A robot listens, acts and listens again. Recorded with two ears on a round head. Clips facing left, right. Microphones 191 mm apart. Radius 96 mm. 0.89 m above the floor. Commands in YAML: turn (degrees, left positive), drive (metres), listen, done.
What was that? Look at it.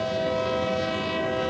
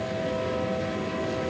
listen: true
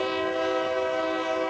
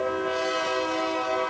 listen: true
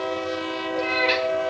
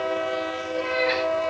turn: 45
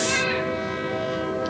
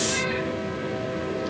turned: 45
turn: 85
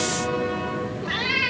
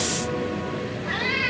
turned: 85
turn: 45
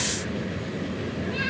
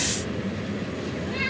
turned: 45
turn: 10
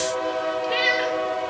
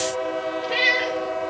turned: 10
done: "Found it: a cat meowing, straight ahead."